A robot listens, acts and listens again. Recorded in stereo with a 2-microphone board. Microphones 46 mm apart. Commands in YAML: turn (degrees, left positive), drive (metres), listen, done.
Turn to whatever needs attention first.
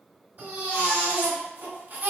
turn: -50
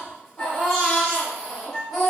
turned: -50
done: "Facing the baby crying, 1 to 2 m away."